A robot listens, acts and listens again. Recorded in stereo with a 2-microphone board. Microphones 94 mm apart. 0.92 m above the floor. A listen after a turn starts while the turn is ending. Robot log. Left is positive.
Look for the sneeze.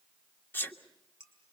note: The sneeze: about 25° left or 155° left.
cmd yaw +25
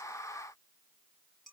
cmd idle
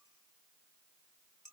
end: I heard a sneeze, but can't make it out now. It was about straight ahead or 130° left.